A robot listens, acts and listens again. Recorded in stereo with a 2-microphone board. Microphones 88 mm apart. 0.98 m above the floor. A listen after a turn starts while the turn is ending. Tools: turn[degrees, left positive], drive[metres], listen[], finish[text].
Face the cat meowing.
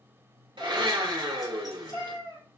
Thought: The cat meowing: about 75° left or 105° left.
Action: turn[75]
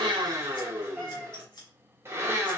Thought: So it is at 25° left.
Action: turn[25]
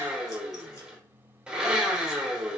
Action: listen[]
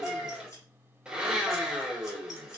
Action: finish[Found it: a cat meowing, straight ahead.]